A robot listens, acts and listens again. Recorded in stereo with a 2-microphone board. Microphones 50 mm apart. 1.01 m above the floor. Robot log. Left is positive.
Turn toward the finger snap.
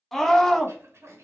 cmd idle
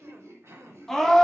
cmd idle
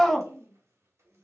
end: I can't make out a finger snap, only a scream and throat clearing.